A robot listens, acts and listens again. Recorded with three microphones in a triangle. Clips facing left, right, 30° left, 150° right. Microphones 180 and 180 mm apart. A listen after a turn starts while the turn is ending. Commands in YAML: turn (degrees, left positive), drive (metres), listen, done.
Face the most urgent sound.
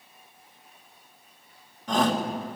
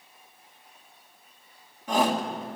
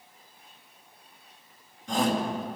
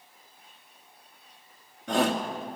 turn: -170
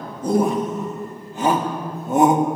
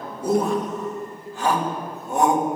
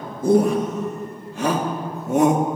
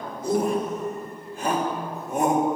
turn: 20
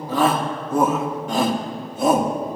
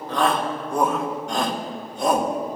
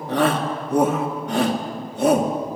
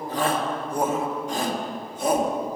done: "Found it: a shout, straight ahead."